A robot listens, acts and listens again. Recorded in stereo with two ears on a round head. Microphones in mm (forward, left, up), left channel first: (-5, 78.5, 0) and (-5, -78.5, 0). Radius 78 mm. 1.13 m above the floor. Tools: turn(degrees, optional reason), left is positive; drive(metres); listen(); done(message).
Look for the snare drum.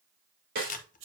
turn(degrees=-60, reason="The snare drum: about 60° right or 120° right.")
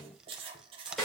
done("Facing the snare drum.")